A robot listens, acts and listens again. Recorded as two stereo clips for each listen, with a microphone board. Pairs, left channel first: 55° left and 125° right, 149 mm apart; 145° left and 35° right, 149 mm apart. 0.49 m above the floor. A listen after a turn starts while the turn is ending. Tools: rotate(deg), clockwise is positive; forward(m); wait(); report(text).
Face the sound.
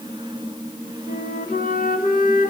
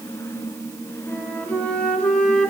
rotate(-65)
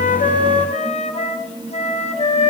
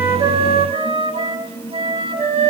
rotate(-15)
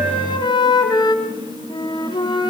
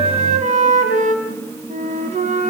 report("Found it: a flute, straight ahead.")